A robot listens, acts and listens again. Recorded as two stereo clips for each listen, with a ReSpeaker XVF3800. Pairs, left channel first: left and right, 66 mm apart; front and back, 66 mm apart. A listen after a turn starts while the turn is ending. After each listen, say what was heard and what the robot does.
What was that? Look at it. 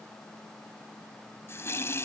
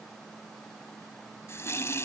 The running tap: 45° left. Turn 45° left.
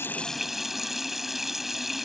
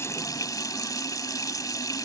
Facing the running tap.